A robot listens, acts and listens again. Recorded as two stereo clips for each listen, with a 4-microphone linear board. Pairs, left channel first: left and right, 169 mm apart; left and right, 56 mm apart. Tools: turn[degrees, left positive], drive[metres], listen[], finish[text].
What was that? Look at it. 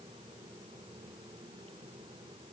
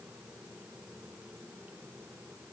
Action: listen[]
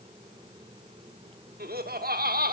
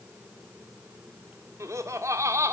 Thought: The laughter: about 65° right or 115° right.
Action: turn[-65]
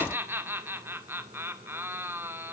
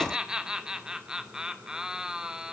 Thought: So it is at 15° right.
Action: turn[-15]
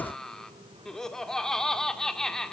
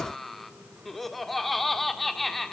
Action: finish[Facing the laughter.]